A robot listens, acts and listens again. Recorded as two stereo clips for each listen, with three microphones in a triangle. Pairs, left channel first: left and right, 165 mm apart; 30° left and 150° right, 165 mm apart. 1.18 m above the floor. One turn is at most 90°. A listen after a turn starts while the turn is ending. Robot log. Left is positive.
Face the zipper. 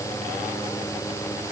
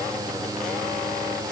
cmd idle
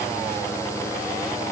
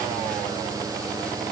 cmd idle
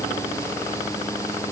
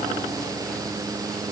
end: I can't make out a zipper.